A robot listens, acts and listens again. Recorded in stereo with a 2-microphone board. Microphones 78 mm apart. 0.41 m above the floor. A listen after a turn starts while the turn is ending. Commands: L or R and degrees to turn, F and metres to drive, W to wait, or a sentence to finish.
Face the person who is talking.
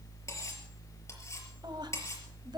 R65
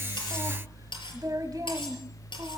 R55
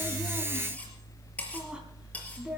R15
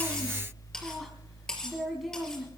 Facing the woman speaking, 2 to 4 m away.